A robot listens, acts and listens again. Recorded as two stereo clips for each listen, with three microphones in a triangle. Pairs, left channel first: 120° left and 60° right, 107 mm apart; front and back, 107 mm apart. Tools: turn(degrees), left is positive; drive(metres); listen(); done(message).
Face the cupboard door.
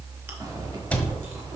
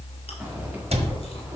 turn(degrees=-165)
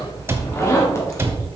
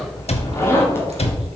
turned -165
turn(degrees=10)
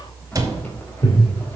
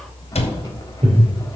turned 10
done("Found it: a cupboard door, straight ahead.")